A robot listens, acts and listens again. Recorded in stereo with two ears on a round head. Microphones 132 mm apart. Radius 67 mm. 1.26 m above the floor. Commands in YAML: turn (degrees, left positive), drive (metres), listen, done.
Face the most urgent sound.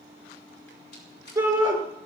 turn: -15
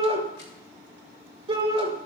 turn: -150
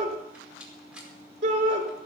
turn: -50
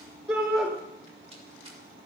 turn: -10
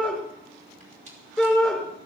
done: "Found it: a shout, straight ahead."